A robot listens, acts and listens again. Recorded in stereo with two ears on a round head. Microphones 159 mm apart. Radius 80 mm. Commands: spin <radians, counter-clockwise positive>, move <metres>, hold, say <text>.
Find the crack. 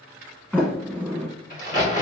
spin 0.79
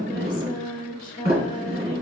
hold
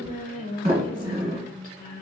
say I heard a crack, but can't make it out now. It was about straight ahead or 90° left.